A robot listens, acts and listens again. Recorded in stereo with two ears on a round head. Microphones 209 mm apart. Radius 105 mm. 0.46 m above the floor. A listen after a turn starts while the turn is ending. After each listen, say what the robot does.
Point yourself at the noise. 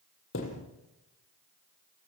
Turn 60° left.
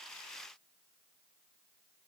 Keep listening.
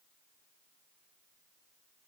I heard a thud, but can't make it out now. It was about straight ahead or 60° left.